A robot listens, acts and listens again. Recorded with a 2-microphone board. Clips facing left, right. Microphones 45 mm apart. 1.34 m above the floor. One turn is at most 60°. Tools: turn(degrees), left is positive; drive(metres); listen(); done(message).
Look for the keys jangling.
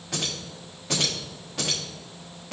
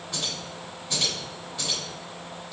turn(degrees=60)
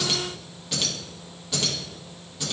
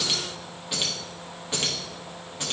turn(degrees=-45)
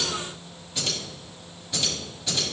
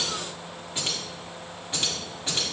turn(degrees=-30)
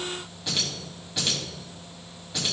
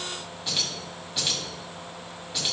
done("Facing the keys jangling, 2 to 4 m away.")